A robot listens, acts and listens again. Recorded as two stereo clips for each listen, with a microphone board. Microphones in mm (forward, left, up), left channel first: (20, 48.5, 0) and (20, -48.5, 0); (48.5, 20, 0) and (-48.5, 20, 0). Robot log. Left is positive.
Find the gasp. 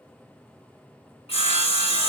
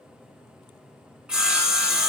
cmd idle
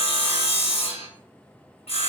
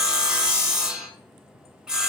cmd idle
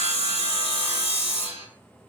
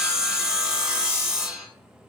end: I can't make out a gasp to turn to.